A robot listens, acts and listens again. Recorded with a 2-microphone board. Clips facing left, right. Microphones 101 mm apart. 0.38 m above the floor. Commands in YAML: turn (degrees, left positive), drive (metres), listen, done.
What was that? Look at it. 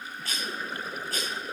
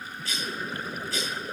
turn: 50
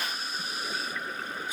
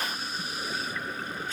turn: 15
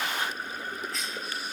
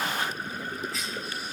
done: "Facing the cough, 1 to 2 m away."